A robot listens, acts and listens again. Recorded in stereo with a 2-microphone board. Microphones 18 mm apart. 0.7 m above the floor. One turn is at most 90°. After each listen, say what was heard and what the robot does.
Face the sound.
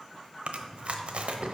The chewing: about 70° right or 110° right. Turn 70° right.
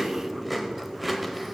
So it is at 10° right. Turn 10° right.
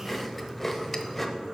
Facing the chewing.